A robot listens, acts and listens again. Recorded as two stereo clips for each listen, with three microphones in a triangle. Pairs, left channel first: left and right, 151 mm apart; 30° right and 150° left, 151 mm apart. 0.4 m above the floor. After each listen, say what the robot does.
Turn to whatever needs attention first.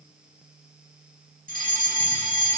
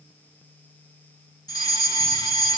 Turn 90° right.
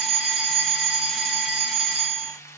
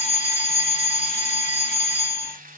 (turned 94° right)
Facing the fire alarm, over 4 m away.